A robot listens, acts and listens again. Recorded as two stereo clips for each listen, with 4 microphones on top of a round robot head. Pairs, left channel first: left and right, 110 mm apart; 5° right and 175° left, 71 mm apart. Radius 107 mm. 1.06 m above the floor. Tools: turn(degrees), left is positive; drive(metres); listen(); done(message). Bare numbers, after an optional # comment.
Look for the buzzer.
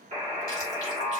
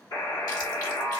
# The buzzer: 45° right.
turn(-45)
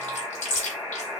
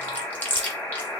# The buzzer is now 15° right.
turn(-15)
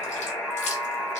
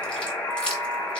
done("Found it: a buzzer, straight ahead.")